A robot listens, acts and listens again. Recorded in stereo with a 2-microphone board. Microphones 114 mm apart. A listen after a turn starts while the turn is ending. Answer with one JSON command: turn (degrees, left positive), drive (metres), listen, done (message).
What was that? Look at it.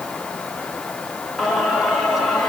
{"turn": 30}
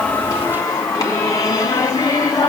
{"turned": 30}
{"turn": 145}
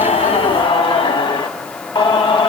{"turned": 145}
{"turn": 45}
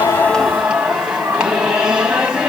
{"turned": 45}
{"turn": -10}
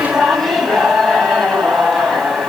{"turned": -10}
{"done": "Facing the singing."}